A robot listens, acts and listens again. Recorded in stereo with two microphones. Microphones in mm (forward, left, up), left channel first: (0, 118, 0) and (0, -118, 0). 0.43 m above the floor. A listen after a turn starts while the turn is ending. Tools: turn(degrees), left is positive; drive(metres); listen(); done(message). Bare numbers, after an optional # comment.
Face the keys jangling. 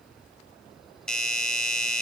listen()
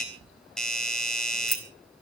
turn(90)
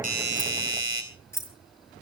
# So it is at 10° left.
turn(10)
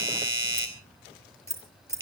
# The keys jangling is now 10° left.
turn(10)
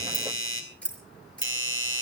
done("Found it: keys jangling, straight ahead.")